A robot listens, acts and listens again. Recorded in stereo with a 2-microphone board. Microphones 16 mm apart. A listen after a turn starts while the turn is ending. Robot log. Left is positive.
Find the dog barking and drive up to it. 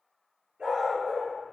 note: The dog barking: about 70° right or 110° right.
cmd yaw -70
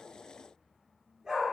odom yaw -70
note: So it is at 40° right.
cmd yaw -40
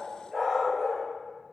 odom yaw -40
cmd fwd 1.0
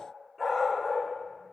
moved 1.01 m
cmd fwd 1.0
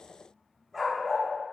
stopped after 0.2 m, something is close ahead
note: The dog barking is now 10° right.
cmd yaw -10
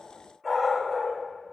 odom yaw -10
end: I am next to the dog barking.